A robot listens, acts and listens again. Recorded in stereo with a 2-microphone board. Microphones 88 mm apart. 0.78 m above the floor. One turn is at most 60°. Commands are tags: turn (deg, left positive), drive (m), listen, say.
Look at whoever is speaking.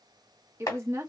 <turn deg="-30"/>
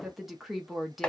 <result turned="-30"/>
<say>Facing the woman speaking, under 1 m away.</say>